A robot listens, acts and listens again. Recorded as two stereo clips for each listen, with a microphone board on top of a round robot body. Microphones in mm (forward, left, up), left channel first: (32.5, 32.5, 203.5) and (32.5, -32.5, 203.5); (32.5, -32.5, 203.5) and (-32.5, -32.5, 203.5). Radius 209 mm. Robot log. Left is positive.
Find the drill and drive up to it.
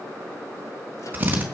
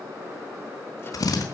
note: The drill: 25° right.
cmd yaw -25
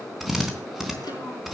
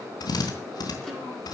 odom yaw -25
cmd fwd 1.0
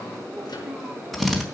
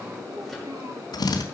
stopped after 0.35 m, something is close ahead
end: Blocked. The drill is further on, straight ahead.